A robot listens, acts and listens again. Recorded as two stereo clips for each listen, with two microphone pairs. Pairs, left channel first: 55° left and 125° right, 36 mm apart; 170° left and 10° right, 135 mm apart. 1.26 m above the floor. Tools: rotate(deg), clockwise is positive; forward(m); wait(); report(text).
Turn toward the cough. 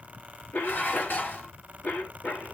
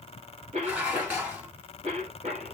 rotate(-20)
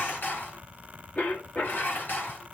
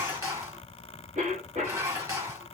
rotate(-10)
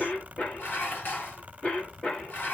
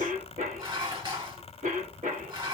report("Found it: a cough, straight ahead, 2 to 4 m away.")